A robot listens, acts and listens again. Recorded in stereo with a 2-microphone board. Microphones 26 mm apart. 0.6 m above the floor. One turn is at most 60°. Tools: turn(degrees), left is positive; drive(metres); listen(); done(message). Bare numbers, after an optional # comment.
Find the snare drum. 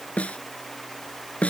# The snare drum: about 70° left or 110° left.
turn(60)
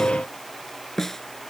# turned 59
# So it is at 15° left.
turn(15)
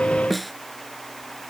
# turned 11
done("Found it: a snare drum, straight ahead.")